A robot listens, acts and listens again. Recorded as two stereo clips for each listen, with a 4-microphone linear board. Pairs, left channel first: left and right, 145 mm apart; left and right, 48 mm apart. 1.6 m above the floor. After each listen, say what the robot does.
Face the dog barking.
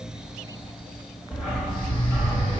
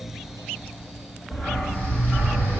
Turn 30° right.
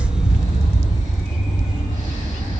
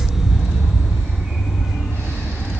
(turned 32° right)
Turn 135° right.
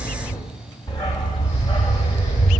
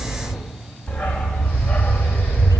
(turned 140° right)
Turn 35° left.
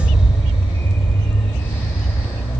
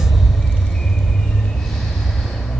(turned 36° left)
Turn 10° left.
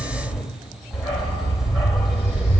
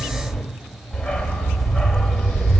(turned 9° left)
Found it: a dog barking, straight ahead.